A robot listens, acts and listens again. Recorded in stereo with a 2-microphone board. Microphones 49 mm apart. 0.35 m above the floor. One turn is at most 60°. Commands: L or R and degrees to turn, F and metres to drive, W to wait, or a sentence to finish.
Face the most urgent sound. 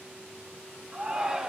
R15
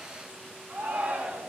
R60
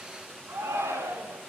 R60
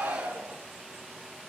R45
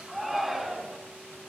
Found it: a shout, straight ahead, 2 to 4 m away.